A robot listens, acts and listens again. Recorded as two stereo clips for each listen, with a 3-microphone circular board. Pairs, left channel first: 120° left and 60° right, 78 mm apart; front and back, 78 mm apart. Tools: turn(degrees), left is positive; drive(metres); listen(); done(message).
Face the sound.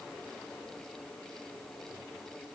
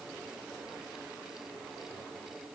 listen()
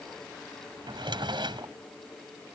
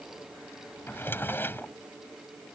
turn(degrees=-65)
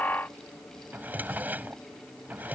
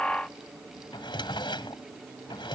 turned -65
turn(degrees=10)
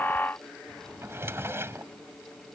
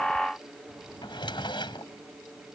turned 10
done("Facing the drawer.")